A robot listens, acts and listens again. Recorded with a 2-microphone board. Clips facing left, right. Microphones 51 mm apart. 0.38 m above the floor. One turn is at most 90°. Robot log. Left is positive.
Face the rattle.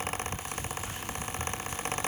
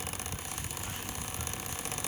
cmd idle
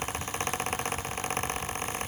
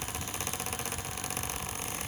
cmd idle
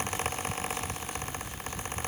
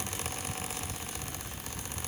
end: I can't make out a rattle.